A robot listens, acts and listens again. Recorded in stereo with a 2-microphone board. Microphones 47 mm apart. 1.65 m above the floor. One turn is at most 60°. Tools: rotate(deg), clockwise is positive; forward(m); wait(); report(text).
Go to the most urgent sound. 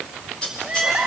rotate(30)
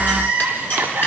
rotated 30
rotate(60)
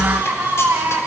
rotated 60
rotate(60)
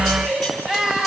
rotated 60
rotate(15)
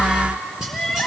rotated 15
forward(1.0)
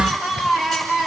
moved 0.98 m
forward(1.0)
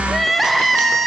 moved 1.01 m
forward(1.0)
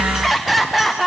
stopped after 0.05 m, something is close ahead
report("Arrived at the crying, straight ahead.")